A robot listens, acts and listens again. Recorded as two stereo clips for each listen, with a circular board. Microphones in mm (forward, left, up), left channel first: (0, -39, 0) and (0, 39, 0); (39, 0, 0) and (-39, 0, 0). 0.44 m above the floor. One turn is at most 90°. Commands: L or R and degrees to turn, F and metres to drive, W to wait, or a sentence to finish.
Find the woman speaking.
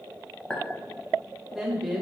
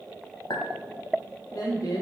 Found it: a woman speaking, straight ahead.